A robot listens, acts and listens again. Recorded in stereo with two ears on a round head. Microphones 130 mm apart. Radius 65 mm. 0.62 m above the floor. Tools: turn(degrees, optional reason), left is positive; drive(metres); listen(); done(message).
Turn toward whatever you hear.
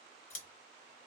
turn(degrees=65, reason="The scissors: about 65° left or 115° left.")
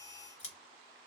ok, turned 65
turn(degrees=50, reason="So it is at 50° left.")
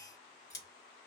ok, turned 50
turn(degrees=25, reason="The scissors is now 25° left.")
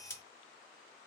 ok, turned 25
turn(degrees=20, reason="The scissors is now 20° left.")
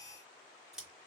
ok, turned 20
done("Facing the scissors.")